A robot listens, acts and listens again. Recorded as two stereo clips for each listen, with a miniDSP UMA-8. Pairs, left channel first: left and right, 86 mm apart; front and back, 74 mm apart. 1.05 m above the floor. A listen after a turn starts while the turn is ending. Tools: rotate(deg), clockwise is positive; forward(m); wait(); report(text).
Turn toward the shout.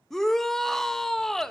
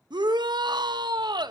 rotate(-175)
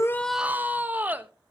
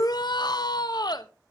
rotate(20)
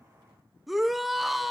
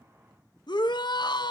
report("Found it: a shout, straight ahead, under 1 m away.")